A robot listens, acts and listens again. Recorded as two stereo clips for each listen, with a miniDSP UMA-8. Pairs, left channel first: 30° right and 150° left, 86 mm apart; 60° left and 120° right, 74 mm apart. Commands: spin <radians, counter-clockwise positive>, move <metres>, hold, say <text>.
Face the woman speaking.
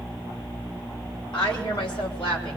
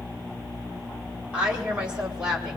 spin -0.79
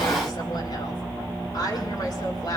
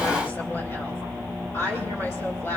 say Found it: a woman speaking, straight ahead.